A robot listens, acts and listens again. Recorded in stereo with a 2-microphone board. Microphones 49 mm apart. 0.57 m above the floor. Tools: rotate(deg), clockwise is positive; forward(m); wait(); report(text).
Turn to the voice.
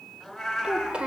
rotate(20)
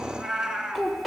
report("Found it: a child speaking, straight ahead.")